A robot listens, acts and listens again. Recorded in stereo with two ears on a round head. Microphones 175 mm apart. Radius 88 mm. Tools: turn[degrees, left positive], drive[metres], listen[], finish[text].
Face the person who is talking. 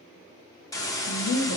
Thought: The woman speaking: about 60° left or 120° left.
Action: turn[60]
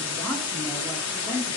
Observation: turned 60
Thought: So it is at 10° right.
Action: turn[-10]
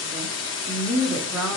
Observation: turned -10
Thought: The woman speaking is now 10° right.
Action: turn[-10]
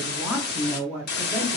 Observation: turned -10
Thought: The woman speaking is now 10° right.
Action: turn[-10]
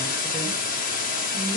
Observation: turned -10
Action: listen[]
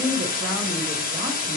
Thought: The woman speaking is now 15° right.
Action: turn[-15]
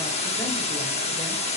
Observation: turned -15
Action: listen[]
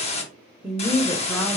Action: finish[Facing the woman speaking, 1 to 2 m away.]